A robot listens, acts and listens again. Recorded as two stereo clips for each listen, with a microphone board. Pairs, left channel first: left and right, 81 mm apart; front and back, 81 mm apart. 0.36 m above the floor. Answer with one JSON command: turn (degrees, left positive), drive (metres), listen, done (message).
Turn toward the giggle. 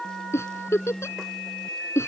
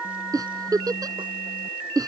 {"turn": 145}
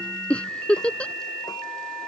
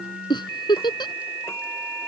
{"turn": 15}
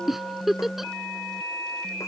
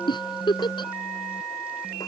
{"done": "Found it: a giggle, straight ahead."}